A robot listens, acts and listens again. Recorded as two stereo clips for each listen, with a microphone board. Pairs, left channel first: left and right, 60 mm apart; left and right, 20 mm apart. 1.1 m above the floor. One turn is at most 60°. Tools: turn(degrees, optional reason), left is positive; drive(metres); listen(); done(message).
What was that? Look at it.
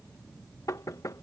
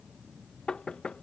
turn(degrees=60, reason="The knocking: about 65° left or 115° left.")
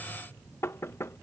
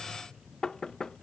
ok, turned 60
turn(degrees=50, reason="So it is at 50° left.")
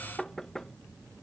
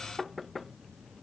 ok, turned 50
done("Facing the knocking.")